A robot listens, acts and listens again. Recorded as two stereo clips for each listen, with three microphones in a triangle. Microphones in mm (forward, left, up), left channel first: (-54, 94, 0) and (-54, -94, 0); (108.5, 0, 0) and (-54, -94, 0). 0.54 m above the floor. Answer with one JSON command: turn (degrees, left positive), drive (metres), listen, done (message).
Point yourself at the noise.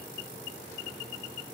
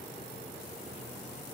{"listen": true}
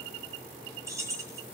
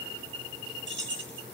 {"turn": -165}
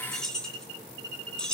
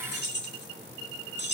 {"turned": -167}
{"done": "Found it: keys jangling, straight ahead."}